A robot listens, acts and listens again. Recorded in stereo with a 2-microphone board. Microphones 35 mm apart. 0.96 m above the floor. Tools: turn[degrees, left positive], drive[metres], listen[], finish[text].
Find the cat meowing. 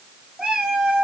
Action: turn[-30]
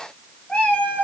Thought: So it is at 30° left.
Action: turn[30]
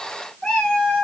Thought: The cat meowing is now 25° left.
Action: turn[25]
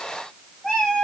Thought: The cat meowing is now 10° left.
Action: turn[10]
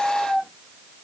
Thought: The cat meowing is now 10° left.
Action: turn[10]
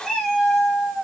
Action: finish[Found it: a cat meowing, straight ahead, 2 to 4 m away.]